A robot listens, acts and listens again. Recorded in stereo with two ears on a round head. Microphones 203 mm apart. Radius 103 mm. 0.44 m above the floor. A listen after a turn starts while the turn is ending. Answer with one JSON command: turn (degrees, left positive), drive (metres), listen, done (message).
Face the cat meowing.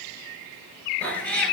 {"turn": 30}
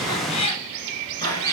{"turn": 20}
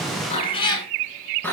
{"turn": 30}
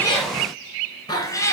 {"turn": 30}
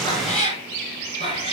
{"turn": 150}
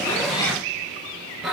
{"done": "Facing the cat meowing, 1 to 2 m away."}